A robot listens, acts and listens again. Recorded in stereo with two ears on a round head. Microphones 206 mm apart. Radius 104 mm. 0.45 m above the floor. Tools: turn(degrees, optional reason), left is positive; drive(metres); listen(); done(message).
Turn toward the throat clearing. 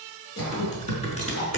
turn(degrees=90)
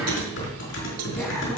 listen()
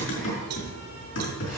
listen()
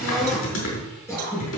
turn(degrees=10, reason="The throat clearing is now 10° left.")
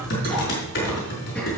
listen()
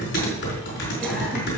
listen()
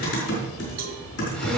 done("I heard throat clearing from this way, but can't make it out now.")